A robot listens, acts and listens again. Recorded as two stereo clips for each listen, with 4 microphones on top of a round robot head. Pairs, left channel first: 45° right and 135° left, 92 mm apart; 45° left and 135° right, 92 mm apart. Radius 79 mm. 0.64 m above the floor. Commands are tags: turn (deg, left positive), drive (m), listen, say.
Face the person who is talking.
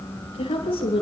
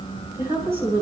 <turn deg="-70"/>
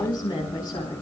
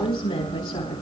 <say>Found it: a woman speaking, straight ahead.</say>